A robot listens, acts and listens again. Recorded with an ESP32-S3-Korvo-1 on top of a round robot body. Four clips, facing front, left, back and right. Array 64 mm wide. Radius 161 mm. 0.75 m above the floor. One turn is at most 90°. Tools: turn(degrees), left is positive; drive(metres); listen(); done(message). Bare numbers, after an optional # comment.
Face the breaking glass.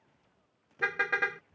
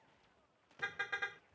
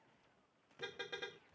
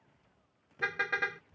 listen()
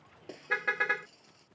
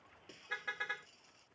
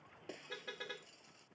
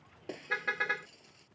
# The breaking glass: 95° right.
turn(-90)
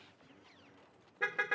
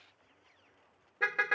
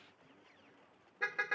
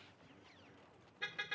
done("I heard breaking glass from this way, but can't make it out now.")